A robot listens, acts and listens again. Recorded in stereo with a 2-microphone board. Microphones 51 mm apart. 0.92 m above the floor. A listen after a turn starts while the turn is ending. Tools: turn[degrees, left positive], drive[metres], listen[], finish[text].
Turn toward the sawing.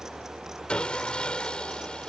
Thought: The sawing: about 20° left or 160° left.
Action: turn[20]
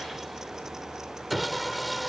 Action: finish[Facing the sawing.]